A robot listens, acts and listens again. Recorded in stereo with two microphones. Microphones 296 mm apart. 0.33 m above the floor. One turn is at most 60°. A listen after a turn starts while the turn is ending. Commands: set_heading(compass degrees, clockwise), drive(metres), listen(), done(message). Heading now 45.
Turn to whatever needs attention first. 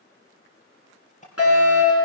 set_heading(350)
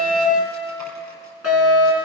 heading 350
set_heading(290)
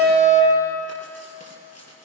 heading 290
set_heading(260)
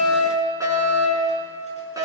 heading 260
set_heading(270)
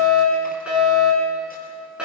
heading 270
done("Facing the fire alarm.")